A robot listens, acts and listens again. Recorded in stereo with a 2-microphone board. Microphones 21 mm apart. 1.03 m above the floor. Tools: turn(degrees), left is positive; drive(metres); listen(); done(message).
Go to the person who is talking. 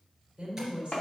turn(degrees=-65)
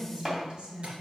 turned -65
turn(degrees=-50)
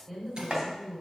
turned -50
turn(degrees=-10)
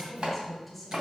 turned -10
drive(metres=1.0)
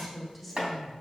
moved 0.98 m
drive(metres=1.0)
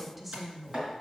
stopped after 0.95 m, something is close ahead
done("Arrived at the woman speaking, straight ahead.")